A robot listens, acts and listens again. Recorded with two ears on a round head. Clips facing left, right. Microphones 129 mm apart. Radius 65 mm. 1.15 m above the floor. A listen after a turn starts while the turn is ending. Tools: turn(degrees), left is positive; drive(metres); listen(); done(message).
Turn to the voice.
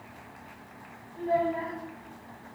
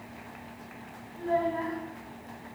turn(degrees=20)
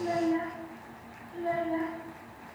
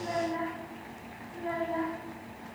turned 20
turn(degrees=30)
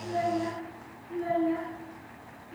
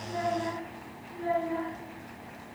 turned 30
turn(degrees=130)
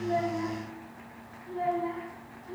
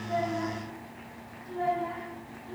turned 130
turn(degrees=10)
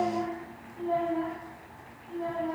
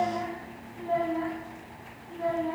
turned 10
done("Facing the child speaking, over 4 m away.")